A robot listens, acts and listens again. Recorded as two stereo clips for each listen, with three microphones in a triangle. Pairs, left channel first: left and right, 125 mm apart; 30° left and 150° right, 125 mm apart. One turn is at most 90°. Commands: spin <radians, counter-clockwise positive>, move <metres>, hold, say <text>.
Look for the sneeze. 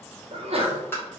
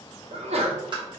spin -1.57
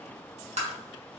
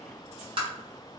spin -0.61
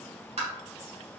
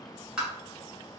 say I heard a sneeze from this way, but can't make it out now.